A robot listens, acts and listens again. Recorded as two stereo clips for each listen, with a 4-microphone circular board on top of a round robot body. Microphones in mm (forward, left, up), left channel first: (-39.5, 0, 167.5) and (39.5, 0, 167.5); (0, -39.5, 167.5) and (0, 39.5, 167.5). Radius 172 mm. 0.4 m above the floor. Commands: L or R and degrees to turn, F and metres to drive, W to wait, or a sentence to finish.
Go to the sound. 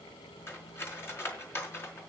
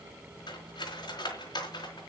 R120
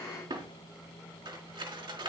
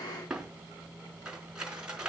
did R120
L10
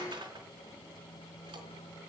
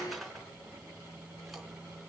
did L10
F1.0
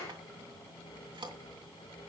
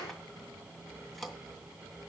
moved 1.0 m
F1.0
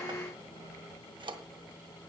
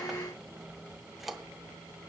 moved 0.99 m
F1.0
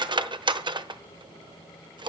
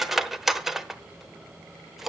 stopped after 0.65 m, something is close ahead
Arrived at the cutlery clinking, straight ahead.